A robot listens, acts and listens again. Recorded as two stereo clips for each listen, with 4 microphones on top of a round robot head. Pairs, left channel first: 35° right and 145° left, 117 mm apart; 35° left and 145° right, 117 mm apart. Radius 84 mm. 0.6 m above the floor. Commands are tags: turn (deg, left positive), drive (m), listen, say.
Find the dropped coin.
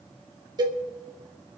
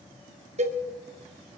<listen/>
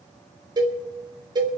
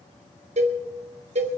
<listen/>
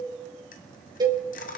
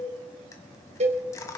<turn deg="-30"/>
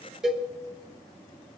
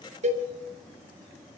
<say>Facing where the dropped coin came from. I can't hear it now.</say>